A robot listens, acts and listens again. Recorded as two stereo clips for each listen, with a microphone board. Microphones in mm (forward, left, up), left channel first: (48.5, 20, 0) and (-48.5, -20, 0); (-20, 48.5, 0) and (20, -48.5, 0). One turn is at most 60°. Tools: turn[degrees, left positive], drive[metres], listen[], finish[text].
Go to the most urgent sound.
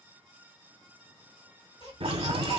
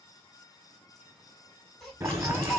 Thought: The baby crying: 25° left.
Action: turn[25]
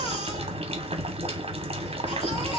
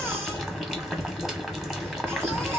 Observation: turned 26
Action: drive[1.0]
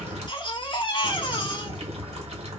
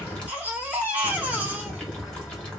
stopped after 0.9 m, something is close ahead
Action: finish[Arrived at the baby crying, straight ahead.]